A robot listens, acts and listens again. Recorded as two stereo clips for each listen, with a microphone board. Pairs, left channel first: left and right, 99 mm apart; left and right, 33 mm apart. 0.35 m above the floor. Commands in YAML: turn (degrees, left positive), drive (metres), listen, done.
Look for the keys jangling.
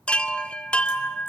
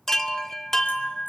listen: true
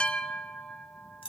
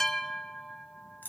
turn: 65
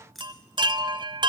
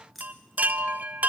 done: "Facing the keys jangling, 2 to 4 m away."